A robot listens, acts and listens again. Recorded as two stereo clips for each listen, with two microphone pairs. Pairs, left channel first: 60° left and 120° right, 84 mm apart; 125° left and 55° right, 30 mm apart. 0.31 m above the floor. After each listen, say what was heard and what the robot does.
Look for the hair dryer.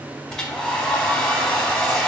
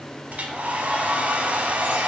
The hair dryer: 20° right. Turn 20° right.
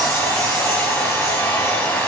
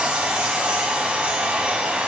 Found it: a hair dryer, straight ahead.